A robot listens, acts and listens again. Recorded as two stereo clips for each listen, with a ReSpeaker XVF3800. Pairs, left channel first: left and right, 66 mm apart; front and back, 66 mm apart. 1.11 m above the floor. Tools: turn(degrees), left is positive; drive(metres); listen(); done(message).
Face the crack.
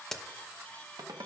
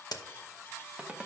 done("Facing the crack, under 1 m away.")